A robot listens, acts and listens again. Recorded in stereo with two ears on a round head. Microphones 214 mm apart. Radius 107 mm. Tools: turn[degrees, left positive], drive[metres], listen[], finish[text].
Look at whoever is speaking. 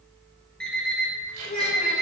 Thought: The child speaking: about 35° left or 145° left.
Action: turn[35]
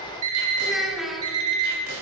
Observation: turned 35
Action: finish[Found it: a child speaking, straight ahead.]